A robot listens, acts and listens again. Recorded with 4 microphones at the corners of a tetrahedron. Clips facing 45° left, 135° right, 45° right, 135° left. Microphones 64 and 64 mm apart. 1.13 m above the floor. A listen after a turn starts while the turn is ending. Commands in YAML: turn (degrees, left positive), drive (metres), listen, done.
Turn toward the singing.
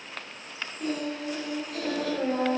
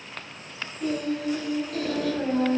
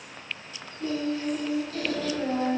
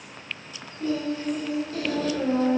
turn: 95
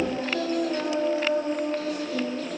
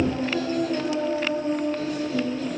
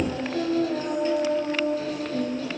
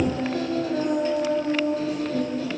turn: 85
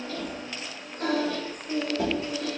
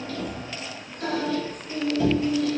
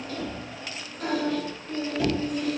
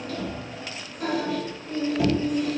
turn: 55
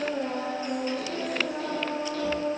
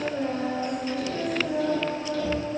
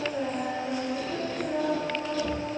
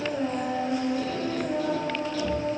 done: "Found it: singing, straight ahead."